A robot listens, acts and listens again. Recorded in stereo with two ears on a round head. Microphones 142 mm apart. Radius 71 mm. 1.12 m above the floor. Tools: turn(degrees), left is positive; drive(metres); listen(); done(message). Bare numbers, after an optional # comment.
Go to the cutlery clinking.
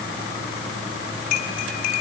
# The cutlery clinking: about 60° left or 120° left.
turn(60)
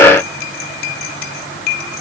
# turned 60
# So it is at 60° left.
turn(60)
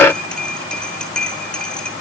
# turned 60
drive(1.0)
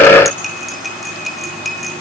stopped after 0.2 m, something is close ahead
done("Blocked. The cutlery clinking is further on, straight ahead.")